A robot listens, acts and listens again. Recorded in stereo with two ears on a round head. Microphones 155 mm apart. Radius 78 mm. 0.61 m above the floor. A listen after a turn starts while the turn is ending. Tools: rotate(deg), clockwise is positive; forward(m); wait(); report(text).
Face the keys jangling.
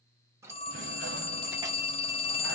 rotate(15)
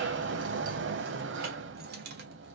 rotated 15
rotate(115)
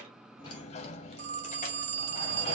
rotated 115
wait()
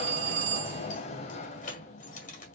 rotate(-40)
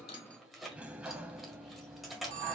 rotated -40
report("Found it: keys jangling, straight ahead.")